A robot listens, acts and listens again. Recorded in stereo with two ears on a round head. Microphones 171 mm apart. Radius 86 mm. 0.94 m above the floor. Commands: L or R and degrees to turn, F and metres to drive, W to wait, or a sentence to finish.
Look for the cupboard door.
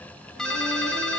W
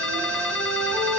W
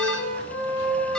I can't make out a cupboard door to turn to.